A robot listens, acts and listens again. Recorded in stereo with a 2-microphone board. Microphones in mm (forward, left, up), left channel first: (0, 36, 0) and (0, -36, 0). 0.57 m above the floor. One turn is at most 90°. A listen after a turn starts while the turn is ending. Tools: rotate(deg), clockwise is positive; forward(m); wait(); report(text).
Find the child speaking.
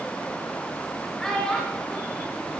rotate(-30)
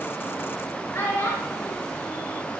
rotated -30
rotate(-90)
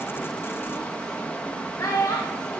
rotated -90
rotate(-55)
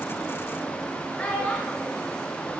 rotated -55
rotate(-20)
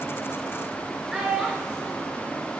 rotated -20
rotate(10)
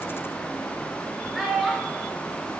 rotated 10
report("Facing the child speaking.")